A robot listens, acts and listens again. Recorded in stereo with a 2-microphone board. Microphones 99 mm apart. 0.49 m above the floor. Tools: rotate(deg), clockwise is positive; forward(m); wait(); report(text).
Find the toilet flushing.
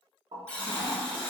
rotate(65)
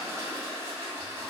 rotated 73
rotate(35)
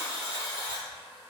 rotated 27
wait()
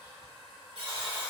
report("Facing the toilet flushing.")